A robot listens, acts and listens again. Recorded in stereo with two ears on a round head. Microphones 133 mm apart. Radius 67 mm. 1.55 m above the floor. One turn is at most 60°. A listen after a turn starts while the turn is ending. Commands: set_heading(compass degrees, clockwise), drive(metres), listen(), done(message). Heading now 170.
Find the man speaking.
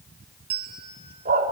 listen()
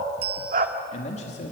set_heading(120)
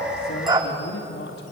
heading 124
set_heading(64)
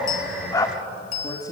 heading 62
set_heading(37)
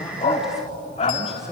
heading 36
done("Found it: a man speaking, straight ahead, 2 to 4 m away.")